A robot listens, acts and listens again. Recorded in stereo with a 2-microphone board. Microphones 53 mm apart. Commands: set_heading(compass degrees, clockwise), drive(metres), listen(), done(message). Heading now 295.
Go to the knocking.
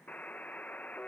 listen()
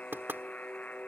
set_heading(340)
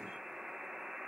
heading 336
listen()
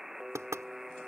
set_heading(71)
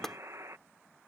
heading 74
drive(1.0)
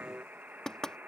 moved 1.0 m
set_heading(64)
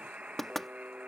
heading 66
drive(1.0)
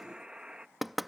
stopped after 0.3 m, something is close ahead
done("I am next to the knocking.")